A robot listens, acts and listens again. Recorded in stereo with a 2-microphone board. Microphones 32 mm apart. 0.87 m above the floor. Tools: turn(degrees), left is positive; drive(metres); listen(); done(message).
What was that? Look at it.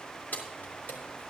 turn(degrees=65)
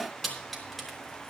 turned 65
done("Found it: keys jangling, straight ahead.")